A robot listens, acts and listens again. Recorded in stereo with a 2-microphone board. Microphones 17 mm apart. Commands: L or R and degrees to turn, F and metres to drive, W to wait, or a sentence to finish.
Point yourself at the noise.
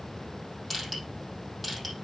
R30
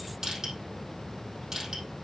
R145
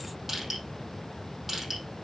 R15
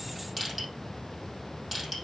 Facing the crushing, over 4 m away.